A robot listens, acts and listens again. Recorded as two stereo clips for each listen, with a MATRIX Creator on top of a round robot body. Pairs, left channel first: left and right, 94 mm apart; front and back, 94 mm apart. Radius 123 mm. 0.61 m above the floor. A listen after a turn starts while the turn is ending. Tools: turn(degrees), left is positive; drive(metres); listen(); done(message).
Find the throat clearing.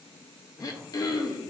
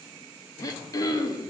turn(degrees=45)
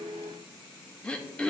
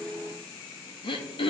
turn(degrees=10)
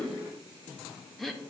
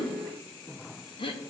done("Found it: throat clearing, straight ahead.")